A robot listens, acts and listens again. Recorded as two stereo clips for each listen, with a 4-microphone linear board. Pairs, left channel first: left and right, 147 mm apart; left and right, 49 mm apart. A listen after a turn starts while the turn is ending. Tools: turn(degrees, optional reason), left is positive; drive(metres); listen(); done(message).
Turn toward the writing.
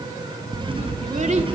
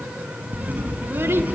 turn(degrees=-35, reason="The writing: about 35° right or 145° right.")
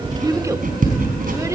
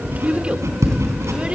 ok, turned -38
turn(degrees=-105, reason="So it is at 105° right.")
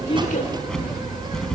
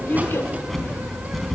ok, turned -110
done("Found it: writing, straight ahead.")